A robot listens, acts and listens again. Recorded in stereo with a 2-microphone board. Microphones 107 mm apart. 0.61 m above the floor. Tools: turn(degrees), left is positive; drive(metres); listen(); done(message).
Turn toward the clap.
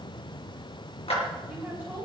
turn(degrees=90)
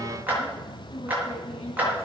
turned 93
turn(degrees=-15)
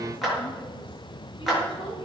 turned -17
done("Facing the clap.")